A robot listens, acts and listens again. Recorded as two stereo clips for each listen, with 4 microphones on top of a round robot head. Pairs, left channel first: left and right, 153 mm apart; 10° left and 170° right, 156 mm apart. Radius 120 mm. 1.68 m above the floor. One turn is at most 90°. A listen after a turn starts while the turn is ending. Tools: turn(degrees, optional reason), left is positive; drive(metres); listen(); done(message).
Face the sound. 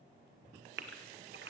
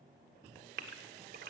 turn(degrees=-90, reason="The gasp: 130° right.")
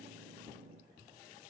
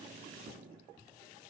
turn(degrees=-40, reason="Nothing new. It was at 40° right.")
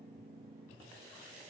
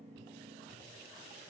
done("I heard a gasp from this way, but can't make it out now.")